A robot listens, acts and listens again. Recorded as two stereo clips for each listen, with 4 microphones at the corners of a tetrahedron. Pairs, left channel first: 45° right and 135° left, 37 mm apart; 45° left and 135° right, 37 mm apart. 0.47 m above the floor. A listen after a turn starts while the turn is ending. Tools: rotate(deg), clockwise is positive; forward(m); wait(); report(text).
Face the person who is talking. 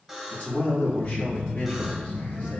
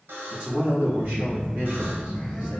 rotate(85)
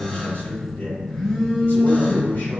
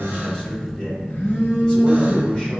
rotate(25)
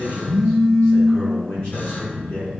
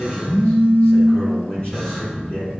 report("Found it: a man speaking, straight ahead, 2 to 4 m away.")